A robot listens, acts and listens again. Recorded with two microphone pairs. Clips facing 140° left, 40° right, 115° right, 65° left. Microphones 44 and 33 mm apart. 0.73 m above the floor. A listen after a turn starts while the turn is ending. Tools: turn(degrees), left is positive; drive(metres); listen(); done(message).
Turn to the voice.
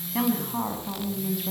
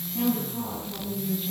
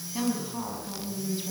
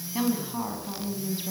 turn(degrees=140)
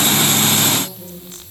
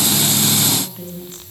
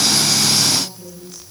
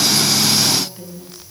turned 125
turn(degrees=15)
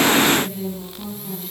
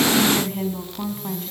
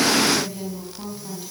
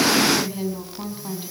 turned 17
done("Facing the woman speaking.")